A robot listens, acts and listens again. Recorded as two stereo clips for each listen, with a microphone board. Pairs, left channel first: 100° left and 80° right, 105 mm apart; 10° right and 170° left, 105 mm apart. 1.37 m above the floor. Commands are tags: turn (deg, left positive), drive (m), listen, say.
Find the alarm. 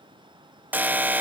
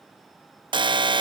<turn deg="-150"/>
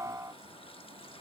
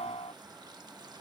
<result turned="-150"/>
<turn deg="-20"/>
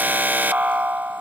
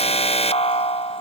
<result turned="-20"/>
<say>Found it: an alarm, straight ahead.</say>